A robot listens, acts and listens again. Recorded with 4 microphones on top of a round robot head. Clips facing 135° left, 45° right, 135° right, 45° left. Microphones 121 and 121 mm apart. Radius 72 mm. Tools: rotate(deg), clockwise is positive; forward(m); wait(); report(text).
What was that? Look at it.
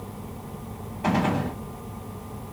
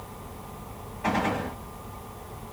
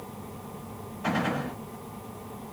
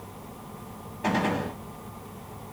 rotate(-75)
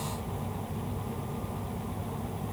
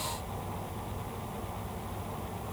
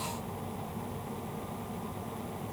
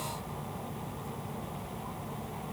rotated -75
report("I heard a gunshot from this way, but can't make it out now.")